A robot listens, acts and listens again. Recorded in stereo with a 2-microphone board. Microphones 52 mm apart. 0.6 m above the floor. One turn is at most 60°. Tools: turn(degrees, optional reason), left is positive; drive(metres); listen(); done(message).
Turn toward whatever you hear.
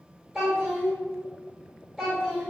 turn(degrees=-30)
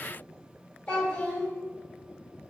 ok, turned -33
turn(degrees=25, reason="So it is at 25° left.")
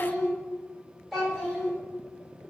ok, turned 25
done("Facing the child speaking.")